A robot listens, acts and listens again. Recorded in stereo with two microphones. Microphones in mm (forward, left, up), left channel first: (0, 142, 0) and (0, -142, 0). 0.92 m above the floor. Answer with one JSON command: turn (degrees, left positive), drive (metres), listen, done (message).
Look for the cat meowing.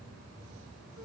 {"listen": true}
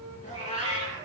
{"turn": 25}
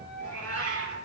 {"turn": 130}
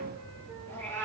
{"done": "Found it: a cat meowing, straight ahead, over 4 m away."}